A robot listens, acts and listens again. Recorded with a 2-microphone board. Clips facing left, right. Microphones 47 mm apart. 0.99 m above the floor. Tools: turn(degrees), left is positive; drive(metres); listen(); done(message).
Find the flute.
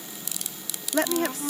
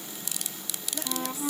turn(degrees=-30)
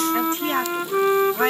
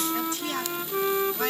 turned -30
turn(degrees=25)
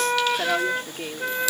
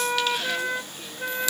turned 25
turn(degrees=10)
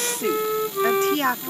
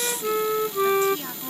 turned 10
done("Facing the flute.")